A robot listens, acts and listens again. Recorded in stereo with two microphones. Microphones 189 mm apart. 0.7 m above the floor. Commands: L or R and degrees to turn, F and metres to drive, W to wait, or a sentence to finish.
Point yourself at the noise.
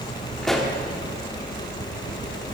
L30
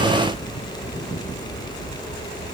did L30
W
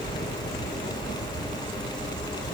I heard a pop, but can't make it out now. It was about 30° right or 150° left.